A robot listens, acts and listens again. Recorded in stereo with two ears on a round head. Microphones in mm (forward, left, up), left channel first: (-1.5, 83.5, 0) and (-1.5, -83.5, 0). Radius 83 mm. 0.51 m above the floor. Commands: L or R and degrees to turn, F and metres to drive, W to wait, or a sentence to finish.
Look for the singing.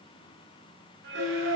R70
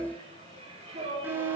R35
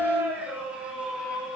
Found it: singing, straight ahead.